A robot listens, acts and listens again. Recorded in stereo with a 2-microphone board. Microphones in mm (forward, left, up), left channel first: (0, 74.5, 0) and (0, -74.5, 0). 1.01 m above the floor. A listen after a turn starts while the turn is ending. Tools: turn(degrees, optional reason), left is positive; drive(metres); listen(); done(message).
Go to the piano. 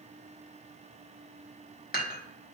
listen()
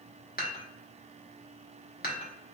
listen()
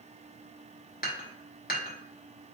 done("I can't make out a piano, only dishes clattering.")